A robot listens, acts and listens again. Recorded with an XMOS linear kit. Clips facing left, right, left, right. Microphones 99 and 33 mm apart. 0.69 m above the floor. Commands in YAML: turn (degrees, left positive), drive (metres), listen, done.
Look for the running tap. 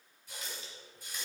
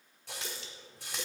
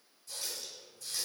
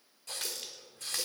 turn: -70
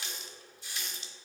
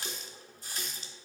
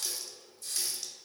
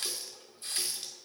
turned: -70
turn: -40
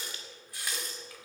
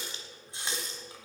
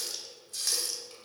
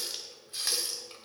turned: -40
turn: -25
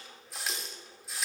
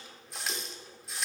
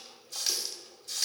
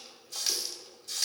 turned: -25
done: "Facing the running tap, 1 to 2 m away."